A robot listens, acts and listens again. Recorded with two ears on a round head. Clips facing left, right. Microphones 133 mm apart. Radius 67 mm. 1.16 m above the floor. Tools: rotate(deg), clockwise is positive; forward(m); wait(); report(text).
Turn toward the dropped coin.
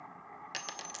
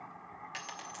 rotate(-40)
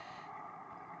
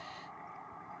wait()
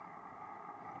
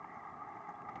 report("I heard a dropped coin, but can't make it out now. It was about straight ahead or 100° left.")